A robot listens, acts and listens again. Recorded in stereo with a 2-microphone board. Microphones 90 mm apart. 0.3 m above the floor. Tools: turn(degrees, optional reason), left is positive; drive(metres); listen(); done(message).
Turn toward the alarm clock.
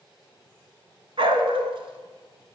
listen()
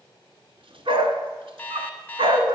turn(degrees=15, reason="The alarm clock: about 15° left or 165° left.")
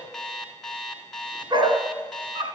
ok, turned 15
done("Facing the alarm clock.")